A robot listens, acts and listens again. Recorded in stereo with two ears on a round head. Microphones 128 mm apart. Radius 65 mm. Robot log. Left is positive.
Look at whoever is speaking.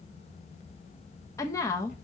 note: The woman speaking: about 20° left or 160° left.
cmd yaw +20
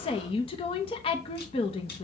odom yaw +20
note: So it is at 135° left.
cmd yaw +135
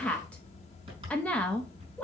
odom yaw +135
note: The woman speaking is now 10° left.
cmd yaw +10
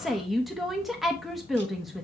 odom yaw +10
end: Found it: a woman speaking, straight ahead, under 1 m away.